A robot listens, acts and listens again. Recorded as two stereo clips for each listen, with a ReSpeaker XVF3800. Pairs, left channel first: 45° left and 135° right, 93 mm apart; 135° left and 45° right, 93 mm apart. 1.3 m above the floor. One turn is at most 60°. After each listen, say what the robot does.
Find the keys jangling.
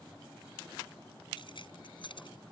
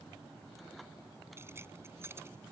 Turn 20° left.
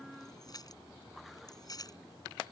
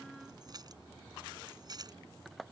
Found it: keys jangling, straight ahead.